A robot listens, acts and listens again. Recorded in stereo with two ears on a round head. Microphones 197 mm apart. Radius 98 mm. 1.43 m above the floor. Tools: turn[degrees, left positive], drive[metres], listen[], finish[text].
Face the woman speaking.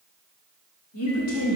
Action: turn[90]
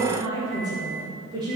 Thought: So it is at 20° right.
Action: turn[-20]
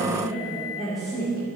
Action: finish[Facing the woman speaking.]